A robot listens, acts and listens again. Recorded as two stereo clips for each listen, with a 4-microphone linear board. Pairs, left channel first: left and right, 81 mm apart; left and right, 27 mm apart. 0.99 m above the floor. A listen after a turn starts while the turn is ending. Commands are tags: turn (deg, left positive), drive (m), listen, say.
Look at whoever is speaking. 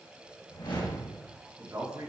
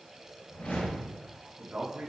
<turn deg="-40"/>
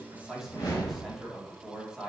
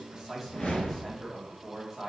<say>Found it: a man speaking, straight ahead.</say>